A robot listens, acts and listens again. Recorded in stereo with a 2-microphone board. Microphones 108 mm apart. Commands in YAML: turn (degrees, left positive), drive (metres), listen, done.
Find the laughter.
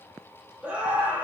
turn: -15
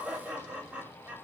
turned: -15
turn: -30
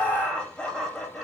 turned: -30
done: "Found it: laughter, straight ahead, 2 to 4 m away."